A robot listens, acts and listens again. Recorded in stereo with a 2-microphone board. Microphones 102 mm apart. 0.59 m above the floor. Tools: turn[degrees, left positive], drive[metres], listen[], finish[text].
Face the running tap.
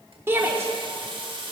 Thought: The running tap: about 55° right or 125° right.
Action: turn[-55]
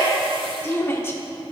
Action: listen[]
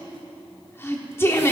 Action: listen[]
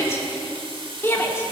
Thought: So it is at 65° right.
Action: turn[-65]
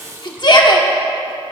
Thought: The running tap is now 35° right.
Action: turn[-35]
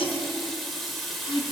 Action: finish[Facing the running tap, 1 to 2 m away.]